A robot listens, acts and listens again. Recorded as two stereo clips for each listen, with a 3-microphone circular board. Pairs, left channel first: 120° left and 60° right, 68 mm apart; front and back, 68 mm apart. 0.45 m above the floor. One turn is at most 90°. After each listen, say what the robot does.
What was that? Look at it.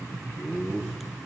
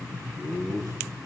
Turn 20° left.
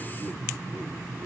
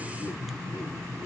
Keep listening.
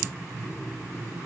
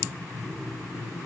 Keep listening.
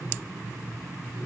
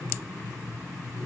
Facing where the laughter came from. I can't hear it now.